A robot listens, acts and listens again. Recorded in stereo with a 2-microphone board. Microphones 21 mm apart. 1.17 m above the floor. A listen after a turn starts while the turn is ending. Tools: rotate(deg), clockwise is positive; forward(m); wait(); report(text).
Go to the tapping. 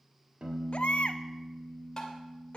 rotate(-25)
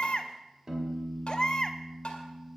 rotate(-130)
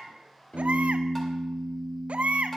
wait()
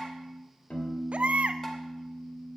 wait()
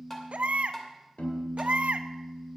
rotate(-15)
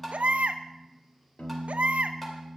wait()
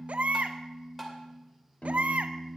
forward(1.0)
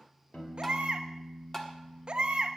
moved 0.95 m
rotate(-10)
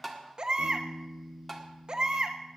forward(1.0)
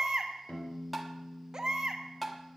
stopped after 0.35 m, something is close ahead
report("Arrived at the tapping, straight ahead.")